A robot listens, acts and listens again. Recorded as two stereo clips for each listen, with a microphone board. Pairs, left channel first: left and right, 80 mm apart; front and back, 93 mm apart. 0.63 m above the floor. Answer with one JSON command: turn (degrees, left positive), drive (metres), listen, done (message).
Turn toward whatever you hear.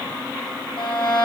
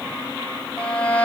{"turn": 75}
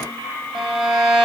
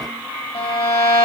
{"turn": -10}
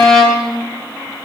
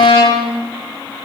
{"done": "Found it: a violin, straight ahead."}